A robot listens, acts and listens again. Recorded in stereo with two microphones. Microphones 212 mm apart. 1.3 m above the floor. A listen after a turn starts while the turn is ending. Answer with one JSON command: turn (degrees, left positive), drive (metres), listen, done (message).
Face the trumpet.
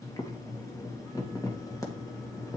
{"listen": true}
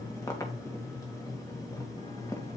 {"listen": true}
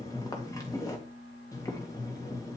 {"done": "I can't make out a trumpet to turn to."}